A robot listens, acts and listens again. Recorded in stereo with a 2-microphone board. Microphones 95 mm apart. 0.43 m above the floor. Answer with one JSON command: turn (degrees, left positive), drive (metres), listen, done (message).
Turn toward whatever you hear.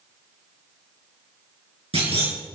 {"turn": -90}
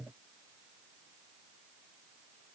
{"done": "I heard a clunk from this way, but can't make it out now."}